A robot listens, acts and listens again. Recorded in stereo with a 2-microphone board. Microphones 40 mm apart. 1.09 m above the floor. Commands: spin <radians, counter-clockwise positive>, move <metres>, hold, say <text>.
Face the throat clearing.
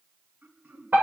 spin -1.57
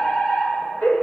hold
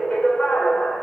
hold
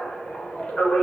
say I heard throat clearing from this way, but can't make it out now.